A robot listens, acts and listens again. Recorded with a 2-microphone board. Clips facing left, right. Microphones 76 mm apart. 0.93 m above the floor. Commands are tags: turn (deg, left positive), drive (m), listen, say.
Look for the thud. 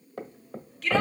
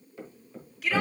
<turn deg="65"/>
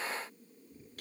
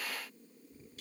<listen/>
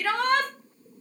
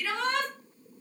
<say>I heard a thud, but can't make it out now. It was about straight ahead or 50° left.</say>